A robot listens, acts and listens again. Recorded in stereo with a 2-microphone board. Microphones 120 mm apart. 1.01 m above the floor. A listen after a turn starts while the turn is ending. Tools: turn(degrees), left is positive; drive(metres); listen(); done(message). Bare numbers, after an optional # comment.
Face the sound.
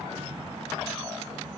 listen()
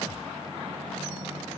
listen()
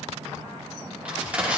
turn(-30)
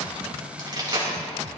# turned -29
# So it is at 140° right.
turn(-140)
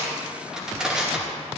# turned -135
done("Found it: crushing, straight ahead.")